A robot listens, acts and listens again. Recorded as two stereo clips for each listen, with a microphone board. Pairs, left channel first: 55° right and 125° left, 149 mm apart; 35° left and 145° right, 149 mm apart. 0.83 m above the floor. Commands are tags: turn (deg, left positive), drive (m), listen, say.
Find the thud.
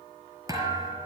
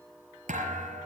<turn deg="-170"/>
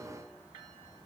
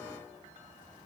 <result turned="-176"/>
<say>I heard a thud from this way, but can't make it out now.</say>